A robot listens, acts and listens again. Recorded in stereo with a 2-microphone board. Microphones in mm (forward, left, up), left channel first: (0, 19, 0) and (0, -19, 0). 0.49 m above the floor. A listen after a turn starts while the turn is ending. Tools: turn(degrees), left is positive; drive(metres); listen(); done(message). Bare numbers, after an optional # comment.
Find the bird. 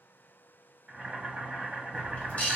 # The bird: about 45° left or 135° left.
turn(45)
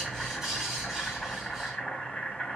done("Found it: a bird, straight ahead.")